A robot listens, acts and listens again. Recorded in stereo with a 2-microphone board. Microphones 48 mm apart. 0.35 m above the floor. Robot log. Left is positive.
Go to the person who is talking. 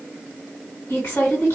note: The woman speaking: about 60° left or 120° left.
cmd yaw +60
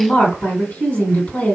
note: So it is at 35° left.
cmd yaw +35
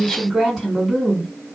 cmd fwd 1.0
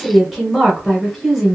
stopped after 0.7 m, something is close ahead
end: Arrived at the woman speaking, straight ahead.